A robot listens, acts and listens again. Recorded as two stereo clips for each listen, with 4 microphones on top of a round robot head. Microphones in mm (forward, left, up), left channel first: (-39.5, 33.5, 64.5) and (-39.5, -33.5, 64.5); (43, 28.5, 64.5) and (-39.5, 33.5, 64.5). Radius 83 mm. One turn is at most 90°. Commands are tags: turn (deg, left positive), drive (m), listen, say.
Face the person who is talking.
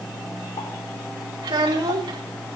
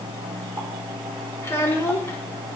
<turn deg="-70"/>
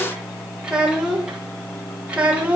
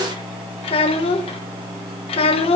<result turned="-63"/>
<turn deg="-15"/>
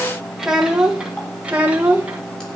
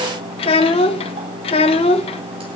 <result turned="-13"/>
<turn deg="-15"/>
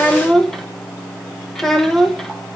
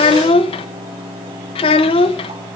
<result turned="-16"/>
<say>Facing the child speaking, 1 to 2 m away.</say>